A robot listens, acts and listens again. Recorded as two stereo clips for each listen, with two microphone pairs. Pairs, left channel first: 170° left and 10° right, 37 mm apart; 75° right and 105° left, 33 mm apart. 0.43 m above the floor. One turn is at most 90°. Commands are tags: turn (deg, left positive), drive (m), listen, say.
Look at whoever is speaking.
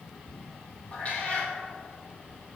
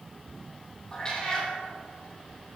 <listen/>
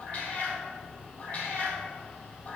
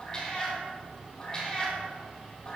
<listen/>
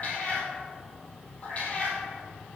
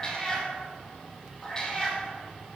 <say>I can't make out anyone speaking, only a cat meowing.</say>